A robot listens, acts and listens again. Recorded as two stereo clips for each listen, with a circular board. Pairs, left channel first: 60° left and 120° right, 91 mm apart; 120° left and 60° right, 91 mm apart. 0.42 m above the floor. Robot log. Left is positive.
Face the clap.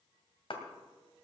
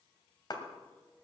note: The clap: 80° left.
cmd yaw +80
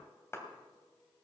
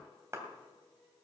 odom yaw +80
end: Found it: a clap, straight ahead, 2 to 4 m away.